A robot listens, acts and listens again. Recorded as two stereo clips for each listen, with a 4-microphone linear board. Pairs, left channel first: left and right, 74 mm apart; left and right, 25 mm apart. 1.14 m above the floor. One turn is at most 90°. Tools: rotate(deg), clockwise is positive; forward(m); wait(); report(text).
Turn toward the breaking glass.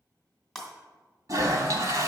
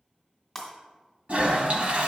rotate(-30)
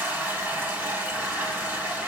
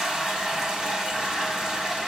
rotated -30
wait()
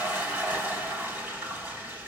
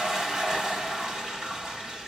report("I heard breaking glass, but can't make it out now. It was about 25° right or 145° left.")